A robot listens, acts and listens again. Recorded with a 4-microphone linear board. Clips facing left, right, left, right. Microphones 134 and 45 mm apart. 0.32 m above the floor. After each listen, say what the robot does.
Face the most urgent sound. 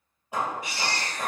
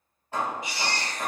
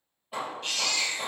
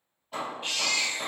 Turn 20° right.
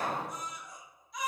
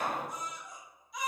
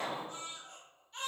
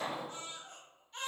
Found it: a baby crying, straight ahead.